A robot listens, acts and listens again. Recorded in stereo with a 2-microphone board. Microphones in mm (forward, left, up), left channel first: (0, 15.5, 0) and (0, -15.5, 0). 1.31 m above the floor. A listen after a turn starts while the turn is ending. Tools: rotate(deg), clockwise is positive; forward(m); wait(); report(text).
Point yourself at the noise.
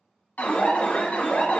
rotate(-50)
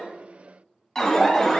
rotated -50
report("Facing the alarm, 1 to 2 m away.")